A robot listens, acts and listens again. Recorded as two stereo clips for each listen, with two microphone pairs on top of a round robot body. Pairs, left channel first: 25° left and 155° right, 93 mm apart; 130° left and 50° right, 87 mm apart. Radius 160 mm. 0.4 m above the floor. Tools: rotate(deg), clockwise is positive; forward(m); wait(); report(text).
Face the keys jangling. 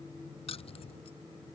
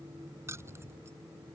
rotate(-15)
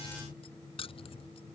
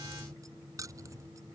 report("Facing the keys jangling.")